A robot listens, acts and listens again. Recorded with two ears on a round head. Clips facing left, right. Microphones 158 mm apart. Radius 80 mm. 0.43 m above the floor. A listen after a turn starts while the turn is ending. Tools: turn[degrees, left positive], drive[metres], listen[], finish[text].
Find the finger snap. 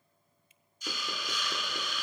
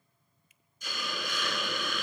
Thought: The finger snap: about 25° left or 155° left.
Action: turn[25]
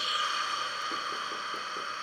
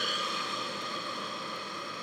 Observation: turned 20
Action: listen[]
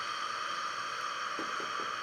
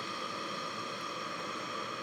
Action: listen[]
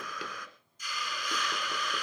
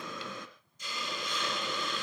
Action: finish[I heard a finger snap, but can't make it out now. It was about 5° left or 135° left.]